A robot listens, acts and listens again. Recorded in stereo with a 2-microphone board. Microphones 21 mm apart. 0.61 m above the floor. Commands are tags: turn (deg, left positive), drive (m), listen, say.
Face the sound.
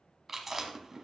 <turn deg="-15"/>
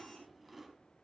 <say>Facing the chewing.</say>